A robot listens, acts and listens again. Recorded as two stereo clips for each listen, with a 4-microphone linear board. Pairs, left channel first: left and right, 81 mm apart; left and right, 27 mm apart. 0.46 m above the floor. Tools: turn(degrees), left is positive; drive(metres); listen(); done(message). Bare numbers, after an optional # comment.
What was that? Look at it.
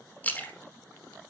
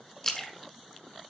# The splash: about 20° left or 160° left.
turn(20)
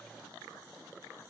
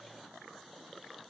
listen()
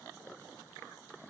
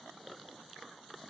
done("I heard a splash, but can't make it out now. It was about straight ahead or 140° left.")